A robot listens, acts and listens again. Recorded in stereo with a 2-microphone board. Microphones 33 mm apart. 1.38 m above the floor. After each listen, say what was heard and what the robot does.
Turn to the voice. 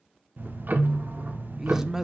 Turn 30° right.
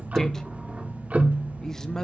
So it is at 15° left. Turn 15° left.
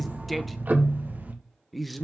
Facing the man speaking.